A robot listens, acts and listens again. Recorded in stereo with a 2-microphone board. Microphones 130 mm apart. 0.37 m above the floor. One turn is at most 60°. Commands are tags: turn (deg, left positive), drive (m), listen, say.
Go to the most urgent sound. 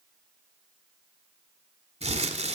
<listen/>
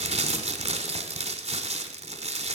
<listen/>
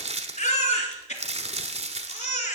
<turn deg="60"/>
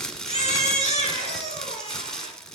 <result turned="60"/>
<turn deg="60"/>
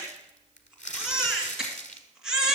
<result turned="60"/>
<drive m="1.0"/>
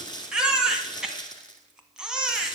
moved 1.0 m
<drive m="1.0"/>
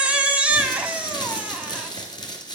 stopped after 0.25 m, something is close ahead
<turn deg="-10"/>
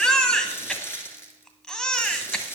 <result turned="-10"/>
<say>Arrived at the baby crying, straight ahead.</say>